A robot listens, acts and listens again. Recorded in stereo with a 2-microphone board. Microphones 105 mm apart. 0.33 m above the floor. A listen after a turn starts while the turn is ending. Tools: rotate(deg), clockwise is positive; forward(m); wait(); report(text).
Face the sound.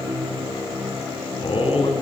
rotate(-60)
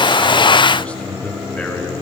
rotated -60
rotate(-15)
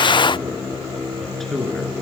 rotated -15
report("Found it: a man speaking, straight ahead.")